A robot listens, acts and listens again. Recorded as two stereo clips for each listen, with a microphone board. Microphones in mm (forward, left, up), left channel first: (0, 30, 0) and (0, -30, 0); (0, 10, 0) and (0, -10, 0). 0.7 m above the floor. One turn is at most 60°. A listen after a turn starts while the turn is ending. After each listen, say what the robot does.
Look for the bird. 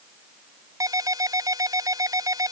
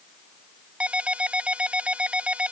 Keep listening.
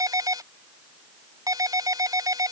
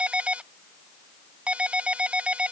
Keep listening.
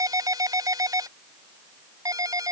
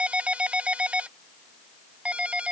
I can't make out a bird, only a ringtone.